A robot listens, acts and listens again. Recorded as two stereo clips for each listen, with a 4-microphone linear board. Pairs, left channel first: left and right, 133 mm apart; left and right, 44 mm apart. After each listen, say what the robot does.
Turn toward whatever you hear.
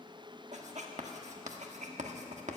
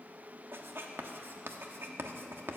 Turn 60° right.
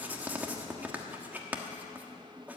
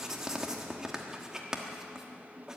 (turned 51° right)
Turn 15° right.
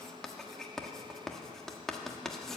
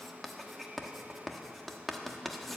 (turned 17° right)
Facing the writing, 1 to 2 m away.